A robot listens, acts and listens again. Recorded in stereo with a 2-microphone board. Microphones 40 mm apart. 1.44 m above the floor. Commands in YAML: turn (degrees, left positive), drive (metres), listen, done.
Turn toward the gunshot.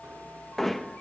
listen: true
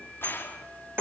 turn: 70
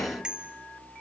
listen: true
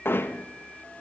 done: "I heard a gunshot, but can't make it out now. It was about straight ahead or 40° left."